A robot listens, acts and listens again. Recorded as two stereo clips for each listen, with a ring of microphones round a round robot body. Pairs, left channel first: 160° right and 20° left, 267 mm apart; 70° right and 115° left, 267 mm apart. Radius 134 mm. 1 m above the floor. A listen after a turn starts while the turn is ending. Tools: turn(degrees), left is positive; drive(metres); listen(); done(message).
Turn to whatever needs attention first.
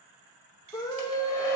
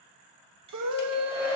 turn(degrees=125)
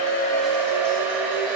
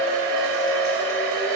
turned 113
turn(degrees=15)
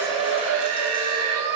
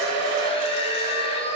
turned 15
done("Found it: a scream, straight ahead, 1 to 2 m away.")